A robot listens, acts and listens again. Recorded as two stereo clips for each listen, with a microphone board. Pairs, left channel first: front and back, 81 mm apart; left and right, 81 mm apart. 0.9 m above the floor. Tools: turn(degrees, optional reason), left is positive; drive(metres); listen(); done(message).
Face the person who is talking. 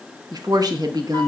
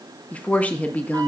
turn(degrees=160, reason="The woman speaking: 160° left.")
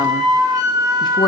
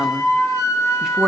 listen()
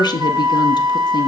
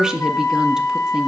turn(degrees=-10, reason="The woman speaking is now 10° right.")
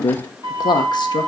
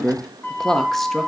done("Facing the woman speaking, under 1 m away.")